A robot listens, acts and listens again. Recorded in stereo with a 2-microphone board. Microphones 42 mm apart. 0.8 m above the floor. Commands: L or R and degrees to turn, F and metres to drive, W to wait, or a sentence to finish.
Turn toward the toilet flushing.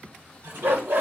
R60
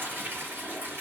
R60
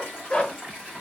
R20
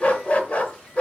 W
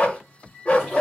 W
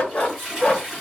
Found it: a toilet flushing, straight ahead, 2 to 4 m away.